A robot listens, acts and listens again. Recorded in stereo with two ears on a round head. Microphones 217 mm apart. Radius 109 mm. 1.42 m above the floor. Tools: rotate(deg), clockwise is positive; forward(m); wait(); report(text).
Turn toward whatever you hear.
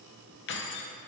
rotate(-50)
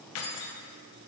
rotate(-75)
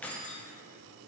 report("Found it: keys jangling, straight ahead.")